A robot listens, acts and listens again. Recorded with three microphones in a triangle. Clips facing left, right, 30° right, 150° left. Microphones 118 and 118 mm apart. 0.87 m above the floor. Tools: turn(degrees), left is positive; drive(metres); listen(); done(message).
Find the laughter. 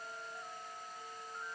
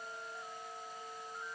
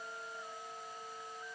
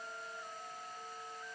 listen()
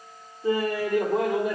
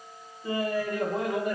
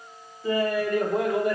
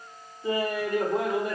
turn(degrees=90)
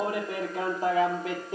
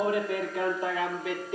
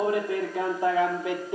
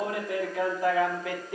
turn(degrees=40)
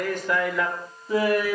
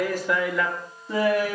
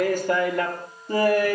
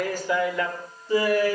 done("Facing the laughter.")